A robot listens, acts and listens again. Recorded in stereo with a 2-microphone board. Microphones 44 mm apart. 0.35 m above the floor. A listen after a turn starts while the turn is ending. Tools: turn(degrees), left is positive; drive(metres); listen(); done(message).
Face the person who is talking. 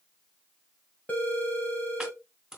listen()
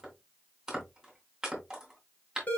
listen()
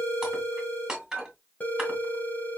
done("I can't make out anyone speaking, only a phone ringing and chopping.")